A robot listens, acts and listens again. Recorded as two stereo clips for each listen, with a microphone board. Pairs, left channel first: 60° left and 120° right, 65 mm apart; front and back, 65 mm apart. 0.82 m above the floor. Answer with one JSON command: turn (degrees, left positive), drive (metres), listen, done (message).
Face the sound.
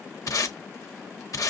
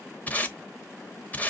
{"turn": 60}
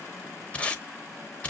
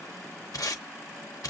{"done": "Found it: tape being pulled, straight ahead, under 1 m away."}